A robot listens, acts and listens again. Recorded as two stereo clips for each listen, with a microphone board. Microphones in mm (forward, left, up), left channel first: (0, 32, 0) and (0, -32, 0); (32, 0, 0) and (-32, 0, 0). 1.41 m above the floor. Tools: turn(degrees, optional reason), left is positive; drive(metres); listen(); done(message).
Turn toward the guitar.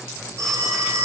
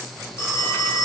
listen()
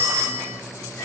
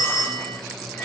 listen()
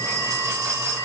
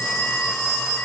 done("I can't make out a guitar to turn to.")